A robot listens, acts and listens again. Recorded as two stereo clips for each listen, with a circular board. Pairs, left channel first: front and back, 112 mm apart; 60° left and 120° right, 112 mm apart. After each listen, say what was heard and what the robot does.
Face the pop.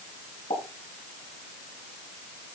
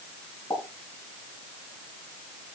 Facing the pop, over 4 m away.